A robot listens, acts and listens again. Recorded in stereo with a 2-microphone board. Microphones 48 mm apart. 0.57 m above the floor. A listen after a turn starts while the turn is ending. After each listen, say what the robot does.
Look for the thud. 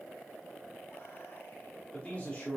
Keep listening.
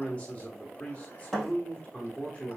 Turn 30° left.
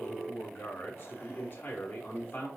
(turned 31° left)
Keep listening.
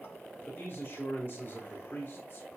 I heard a thud, but can't make it out now. It was about 20° right or 140° left.